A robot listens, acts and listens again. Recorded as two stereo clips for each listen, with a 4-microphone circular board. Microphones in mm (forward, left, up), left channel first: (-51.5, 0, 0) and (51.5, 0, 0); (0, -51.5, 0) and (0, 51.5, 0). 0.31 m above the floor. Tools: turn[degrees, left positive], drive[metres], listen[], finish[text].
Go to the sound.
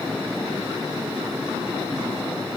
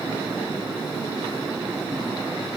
Action: listen[]
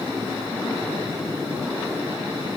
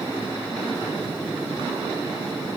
Action: listen[]
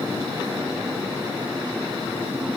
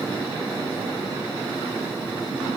Action: finish[I can't make out anything.]